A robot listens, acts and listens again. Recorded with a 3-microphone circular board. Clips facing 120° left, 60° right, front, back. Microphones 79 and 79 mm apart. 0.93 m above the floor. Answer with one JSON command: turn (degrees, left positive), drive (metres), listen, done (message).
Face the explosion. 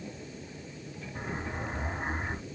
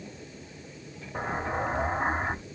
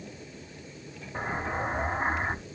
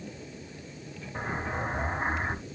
{"turn": -75}
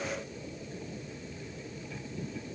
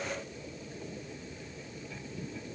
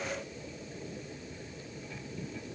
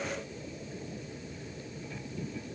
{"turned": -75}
{"done": "I heard an explosion from this way, but can't make it out now."}